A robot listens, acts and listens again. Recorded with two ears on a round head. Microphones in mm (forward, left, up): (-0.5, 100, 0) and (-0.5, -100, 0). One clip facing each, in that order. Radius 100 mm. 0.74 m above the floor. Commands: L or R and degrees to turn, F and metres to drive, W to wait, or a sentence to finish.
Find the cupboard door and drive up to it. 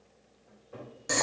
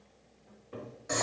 R40
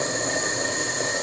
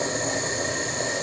W
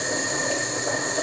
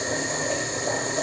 W
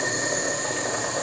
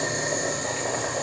I heard a cupboard door, but can't make it out now. It was about straight ahead or 100° right. I did not reach it.